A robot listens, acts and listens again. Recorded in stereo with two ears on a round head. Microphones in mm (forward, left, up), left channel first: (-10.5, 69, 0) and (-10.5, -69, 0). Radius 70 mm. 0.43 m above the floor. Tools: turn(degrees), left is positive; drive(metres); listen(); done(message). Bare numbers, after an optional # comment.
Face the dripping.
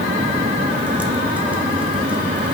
listen()
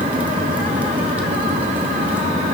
listen()
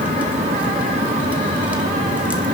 done("I can't make out dripping.")